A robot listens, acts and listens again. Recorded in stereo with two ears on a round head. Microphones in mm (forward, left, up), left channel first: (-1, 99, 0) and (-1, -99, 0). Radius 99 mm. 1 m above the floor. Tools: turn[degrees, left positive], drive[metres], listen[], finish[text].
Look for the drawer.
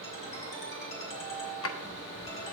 Thought: The drawer: about 65° left or 115° left.
Action: turn[65]
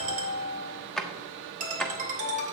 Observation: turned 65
Action: finish[Facing the drawer.]